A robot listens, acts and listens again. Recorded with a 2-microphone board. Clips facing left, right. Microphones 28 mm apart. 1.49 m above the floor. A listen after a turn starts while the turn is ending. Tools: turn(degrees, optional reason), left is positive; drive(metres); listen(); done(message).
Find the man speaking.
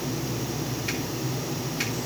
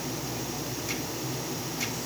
listen()
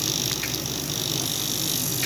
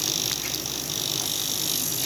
listen()
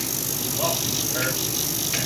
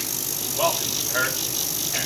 turn(degrees=-40, reason="The man speaking: about 40° right or 140° right.")
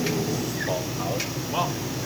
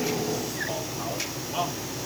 turn(degrees=10, reason="So it is at 10° left.")
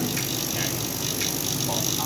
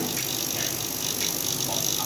listen()
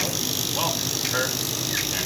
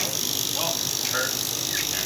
done("Facing the man speaking.")